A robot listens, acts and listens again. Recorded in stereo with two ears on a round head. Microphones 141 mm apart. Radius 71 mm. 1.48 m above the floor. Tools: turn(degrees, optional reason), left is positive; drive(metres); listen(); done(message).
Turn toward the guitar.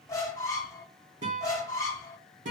turn(degrees=-50, reason="The guitar: about 50° right or 130° right.")
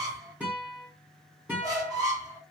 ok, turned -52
turn(degrees=-10, reason="So it is at 10° right.")
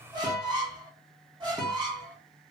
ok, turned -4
done("Found it: a guitar, straight ahead.")